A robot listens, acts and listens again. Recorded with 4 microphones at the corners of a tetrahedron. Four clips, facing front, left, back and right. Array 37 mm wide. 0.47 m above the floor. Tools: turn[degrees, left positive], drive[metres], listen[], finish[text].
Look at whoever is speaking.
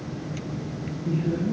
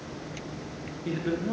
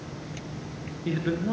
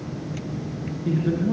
Thought: The man speaking: 170° left.
Action: turn[170]
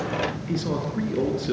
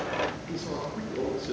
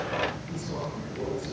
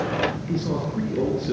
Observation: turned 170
Action: listen[]
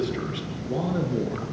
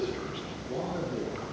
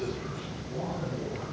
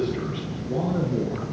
Action: finish[Found it: a man speaking, straight ahead, over 4 m away.]